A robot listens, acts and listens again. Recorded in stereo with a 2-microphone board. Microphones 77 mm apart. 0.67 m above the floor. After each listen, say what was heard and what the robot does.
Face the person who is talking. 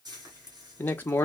The man speaking: about 25° left or 155° left. Turn 25° left.
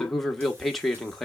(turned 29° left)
Found it: a man speaking, straight ahead, 1 to 2 m away.